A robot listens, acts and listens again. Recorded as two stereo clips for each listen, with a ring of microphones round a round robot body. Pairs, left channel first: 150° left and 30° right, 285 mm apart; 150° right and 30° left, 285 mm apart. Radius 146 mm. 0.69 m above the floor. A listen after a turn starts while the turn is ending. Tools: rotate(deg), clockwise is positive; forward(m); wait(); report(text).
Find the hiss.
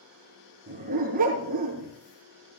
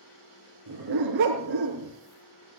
wait()
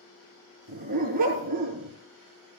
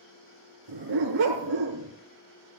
wait()
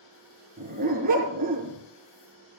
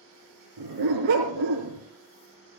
report("I can't make out a hiss, only a dog barking.")